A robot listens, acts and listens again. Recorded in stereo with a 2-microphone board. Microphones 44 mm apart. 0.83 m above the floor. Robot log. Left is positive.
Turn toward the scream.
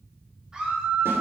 note: The scream: about 20° right or 160° right.
cmd yaw -20
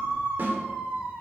note: So it is at 140° right.
cmd yaw -140
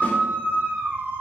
note: The scream is now 50° right.
cmd yaw -50
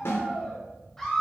note: The scream is now 10° left.
cmd yaw +10
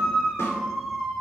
end: Facing the scream.